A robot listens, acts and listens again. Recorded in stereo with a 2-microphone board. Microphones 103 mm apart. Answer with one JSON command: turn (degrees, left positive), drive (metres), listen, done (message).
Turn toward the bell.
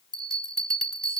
{"turn": 30}
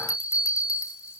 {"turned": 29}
{"turn": 150}
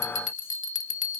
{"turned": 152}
{"done": "Found it: a bell, straight ahead."}